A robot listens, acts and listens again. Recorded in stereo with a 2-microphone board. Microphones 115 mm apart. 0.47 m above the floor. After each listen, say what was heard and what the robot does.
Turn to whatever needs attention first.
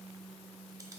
Keep listening.
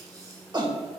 The shout: about 40° right or 140° right. Turn 40° right.
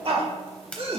So it is at 90° right. Turn 90° right.
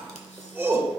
The shout is now 25° right. Turn 25° right.
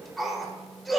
Found it: a shout, straight ahead, 1 to 2 m away.